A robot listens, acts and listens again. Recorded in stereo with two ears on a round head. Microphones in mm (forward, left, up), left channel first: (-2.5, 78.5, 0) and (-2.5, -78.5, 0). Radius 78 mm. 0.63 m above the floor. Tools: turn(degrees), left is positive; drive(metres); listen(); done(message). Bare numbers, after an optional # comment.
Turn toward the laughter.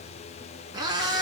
listen()
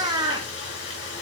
listen()
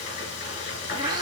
done("I can't make out laughter, only a cat meowing and frying.")